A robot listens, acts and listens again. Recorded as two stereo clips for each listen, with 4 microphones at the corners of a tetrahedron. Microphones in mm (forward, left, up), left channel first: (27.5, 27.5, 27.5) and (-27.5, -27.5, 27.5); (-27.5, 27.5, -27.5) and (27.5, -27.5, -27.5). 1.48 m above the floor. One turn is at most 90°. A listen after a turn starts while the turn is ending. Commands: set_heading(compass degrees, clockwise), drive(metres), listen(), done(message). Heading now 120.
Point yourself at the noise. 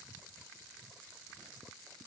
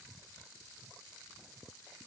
listen()
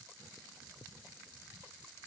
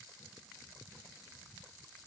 listen()
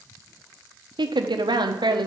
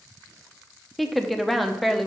set_heading(210)
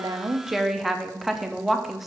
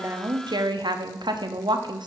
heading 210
set_heading(255)
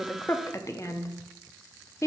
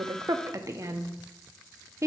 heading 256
done("Facing the woman speaking.")